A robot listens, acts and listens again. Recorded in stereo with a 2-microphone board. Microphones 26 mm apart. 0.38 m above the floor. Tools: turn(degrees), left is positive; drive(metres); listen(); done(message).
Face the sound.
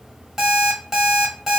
turn(degrees=-30)
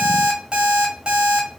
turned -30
turn(degrees=-140)
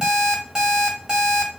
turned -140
turn(degrees=-35)
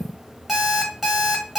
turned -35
turn(degrees=-15)
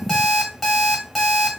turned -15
done("Facing the alarm clock.")